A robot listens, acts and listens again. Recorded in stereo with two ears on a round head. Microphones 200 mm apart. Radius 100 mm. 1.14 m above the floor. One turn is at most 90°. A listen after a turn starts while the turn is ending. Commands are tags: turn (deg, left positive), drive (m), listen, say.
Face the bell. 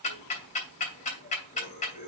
<listen/>
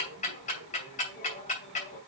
<listen/>
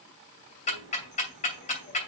<say>I can't make out a bell to turn to.</say>